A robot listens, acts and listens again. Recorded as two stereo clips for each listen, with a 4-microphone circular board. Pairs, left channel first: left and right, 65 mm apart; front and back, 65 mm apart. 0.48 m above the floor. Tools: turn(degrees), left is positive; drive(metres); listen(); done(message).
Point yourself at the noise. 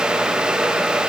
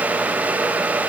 listen()
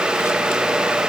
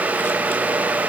listen()
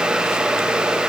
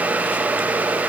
done("I can't make out anything.")